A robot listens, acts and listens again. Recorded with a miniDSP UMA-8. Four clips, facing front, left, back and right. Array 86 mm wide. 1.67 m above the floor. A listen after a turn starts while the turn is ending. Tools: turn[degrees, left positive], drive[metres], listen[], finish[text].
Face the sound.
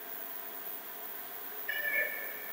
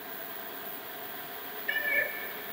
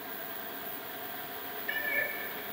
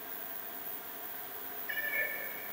Thought: The cat meowing: 100° left.
Action: turn[100]
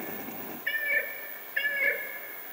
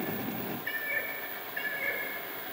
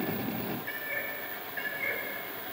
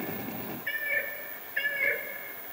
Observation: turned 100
Thought: The cat meowing is now 30° right.
Action: turn[-30]
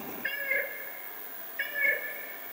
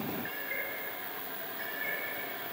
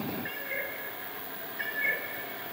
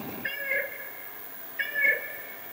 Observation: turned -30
Thought: The cat meowing is now 60° right.
Action: turn[-60]
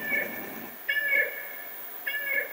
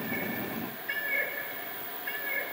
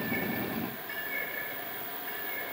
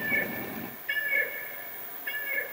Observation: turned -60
Action: finish[Facing the cat meowing, 1 to 2 m away.]